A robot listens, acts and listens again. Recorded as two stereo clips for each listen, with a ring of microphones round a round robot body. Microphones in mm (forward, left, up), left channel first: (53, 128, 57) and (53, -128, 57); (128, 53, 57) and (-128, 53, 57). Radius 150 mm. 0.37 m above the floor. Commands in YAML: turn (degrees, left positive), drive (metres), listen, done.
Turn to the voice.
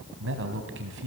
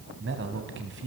turn: -135
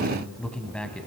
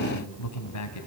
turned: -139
done: "Facing the man speaking, 2 to 4 m away."